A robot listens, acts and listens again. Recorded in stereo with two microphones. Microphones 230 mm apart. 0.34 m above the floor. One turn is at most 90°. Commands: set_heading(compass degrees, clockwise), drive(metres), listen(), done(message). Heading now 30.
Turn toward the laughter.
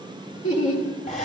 set_heading(320)
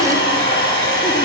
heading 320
listen()
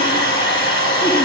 listen()
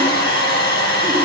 done("I heard laughter, but can't make it out now. It was about straight ahead or 40° left.")